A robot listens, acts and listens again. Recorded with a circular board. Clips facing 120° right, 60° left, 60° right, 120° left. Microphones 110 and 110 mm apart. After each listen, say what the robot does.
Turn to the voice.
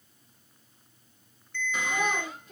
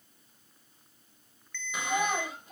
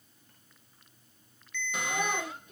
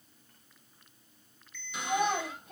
Turn 105° left.
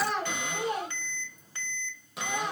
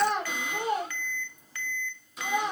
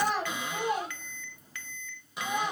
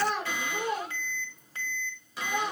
Turn 10° right.
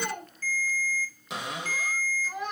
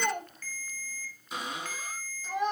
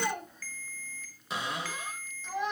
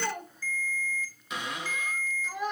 Found it: a child speaking, straight ahead, 1 to 2 m away.